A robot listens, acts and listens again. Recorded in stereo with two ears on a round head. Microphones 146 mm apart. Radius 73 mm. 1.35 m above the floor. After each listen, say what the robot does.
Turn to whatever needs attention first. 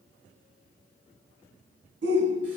Turn 90° right.
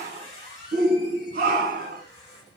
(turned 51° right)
Turn 50° right.
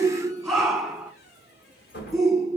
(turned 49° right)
Facing the shout, 1 to 2 m away.